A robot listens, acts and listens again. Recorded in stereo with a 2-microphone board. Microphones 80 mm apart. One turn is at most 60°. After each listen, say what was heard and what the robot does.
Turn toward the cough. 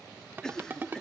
Turn 30° left.
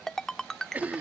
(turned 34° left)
So it is at 25° right. Turn 25° right.
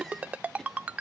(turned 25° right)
Keep listening.
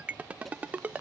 Found it: a cough, straight ahead.